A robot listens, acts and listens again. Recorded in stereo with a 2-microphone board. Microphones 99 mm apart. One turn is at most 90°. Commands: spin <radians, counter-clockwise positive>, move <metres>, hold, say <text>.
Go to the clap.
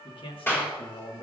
spin 0.44
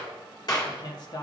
spin 1.57
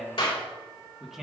spin 1.22
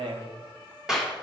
spin -0.17
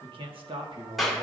move 1.0
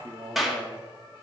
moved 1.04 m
move 1.0
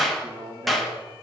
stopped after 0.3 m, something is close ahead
say Arrived at the clap, straight ahead.